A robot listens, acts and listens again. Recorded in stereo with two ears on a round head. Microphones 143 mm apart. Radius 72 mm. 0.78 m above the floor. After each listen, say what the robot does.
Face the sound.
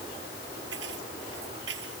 Turn 90° right.
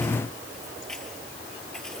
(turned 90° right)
Keep listening.
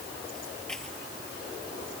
Facing the keys jangling.